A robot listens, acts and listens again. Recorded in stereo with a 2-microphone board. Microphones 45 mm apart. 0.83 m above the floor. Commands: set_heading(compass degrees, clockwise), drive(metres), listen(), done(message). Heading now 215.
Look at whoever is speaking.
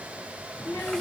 set_heading(160)
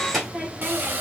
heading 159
done("Found it: a child speaking, straight ahead, 2 to 4 m away.")